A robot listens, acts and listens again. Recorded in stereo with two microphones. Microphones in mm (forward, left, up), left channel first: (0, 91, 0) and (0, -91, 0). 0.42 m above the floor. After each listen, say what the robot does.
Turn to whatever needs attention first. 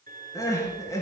Turn 20° left.
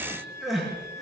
Facing the crying.